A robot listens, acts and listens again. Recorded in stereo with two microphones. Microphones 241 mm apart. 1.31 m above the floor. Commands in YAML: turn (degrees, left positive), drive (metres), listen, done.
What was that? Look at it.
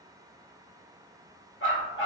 turn: 55
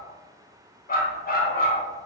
turn: 45
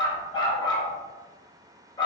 turn: 20
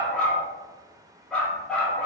done: "Found it: a dog barking, straight ahead, 1 to 2 m away."